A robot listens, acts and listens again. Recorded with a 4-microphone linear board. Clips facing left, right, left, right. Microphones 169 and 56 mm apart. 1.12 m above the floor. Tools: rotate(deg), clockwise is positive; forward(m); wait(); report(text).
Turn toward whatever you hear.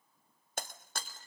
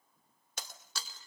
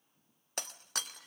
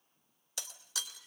rotate(-50)
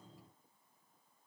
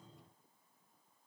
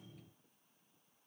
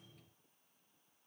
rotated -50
wait()
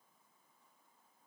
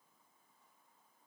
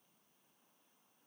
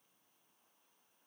report("I heard breaking glass, but can't make it out now. It was about straight ahead or 80° left.")